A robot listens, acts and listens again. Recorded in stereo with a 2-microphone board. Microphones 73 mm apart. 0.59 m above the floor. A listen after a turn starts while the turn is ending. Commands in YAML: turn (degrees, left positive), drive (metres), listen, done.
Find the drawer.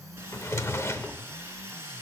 turn: 40
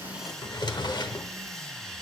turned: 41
turn: 100
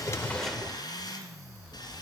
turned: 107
listen: true
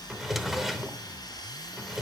done: "Facing the drawer, under 1 m away."